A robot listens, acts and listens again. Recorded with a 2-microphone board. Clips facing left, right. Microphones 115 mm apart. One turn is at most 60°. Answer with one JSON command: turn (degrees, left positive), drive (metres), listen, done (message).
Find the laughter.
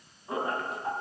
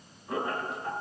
{"turn": 25}
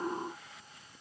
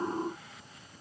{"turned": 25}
{"listen": true}
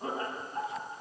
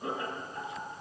{"turn": 60}
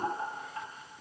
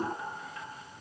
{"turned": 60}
{"turn": 40}
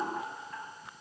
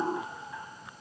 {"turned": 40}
{"done": "Facing the laughter."}